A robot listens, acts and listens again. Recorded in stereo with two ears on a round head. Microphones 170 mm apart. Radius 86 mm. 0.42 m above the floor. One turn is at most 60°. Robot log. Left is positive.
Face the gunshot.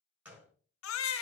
cmd yaw -30
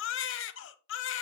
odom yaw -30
cmd idle
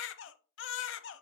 end: I heard a gunshot, but can't make it out now. It was about 20° left or 140° right.